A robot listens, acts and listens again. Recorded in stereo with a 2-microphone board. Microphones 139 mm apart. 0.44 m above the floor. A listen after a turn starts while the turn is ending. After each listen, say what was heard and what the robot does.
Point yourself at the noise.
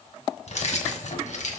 The keys jangling: about 70° left or 110° left. Turn 70° left.
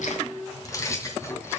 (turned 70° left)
So it is at 20° left. Turn 20° left.
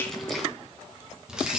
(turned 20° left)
Facing the keys jangling, 2 to 4 m away.